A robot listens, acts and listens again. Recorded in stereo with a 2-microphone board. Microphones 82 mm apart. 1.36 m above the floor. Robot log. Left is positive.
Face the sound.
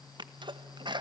note: The sneeze: about 65° right or 115° right.
cmd yaw -65
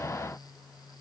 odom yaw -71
cmd idle
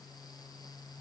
end: I heard a sneeze, but can't make it out now. It was about 5° left or 45° right.